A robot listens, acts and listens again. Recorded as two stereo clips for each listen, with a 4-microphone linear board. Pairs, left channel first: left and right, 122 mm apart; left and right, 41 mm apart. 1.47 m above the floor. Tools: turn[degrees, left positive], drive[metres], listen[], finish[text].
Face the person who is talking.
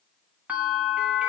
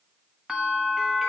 Action: listen[]
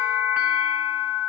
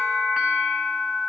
Action: listen[]
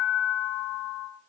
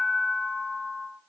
Action: finish[I can't make out anyone speaking, only a bell.]